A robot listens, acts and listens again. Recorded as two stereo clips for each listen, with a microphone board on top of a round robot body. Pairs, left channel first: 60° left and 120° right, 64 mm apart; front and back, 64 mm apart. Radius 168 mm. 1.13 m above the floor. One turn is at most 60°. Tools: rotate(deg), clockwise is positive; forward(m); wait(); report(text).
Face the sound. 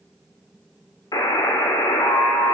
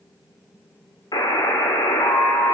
rotate(-25)
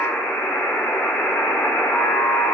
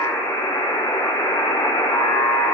report("Facing the buzzer.")